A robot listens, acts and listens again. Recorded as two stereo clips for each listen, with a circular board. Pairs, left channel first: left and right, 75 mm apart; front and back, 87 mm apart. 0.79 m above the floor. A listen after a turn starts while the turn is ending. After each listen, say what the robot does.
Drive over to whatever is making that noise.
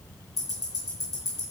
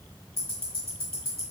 Turn 120° left.
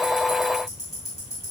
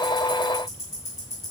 Turn 50° left.
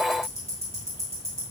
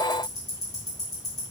Turn 35° left.
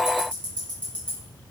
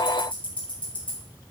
Turn 15° left.
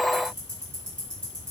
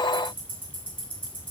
Drive 1.0 m forward.
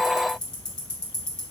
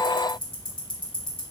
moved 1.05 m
Turn 10° left.
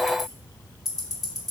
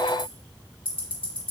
Drive 1.0 m forward.
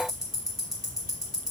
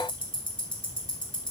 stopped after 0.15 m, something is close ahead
I am next to the ticking.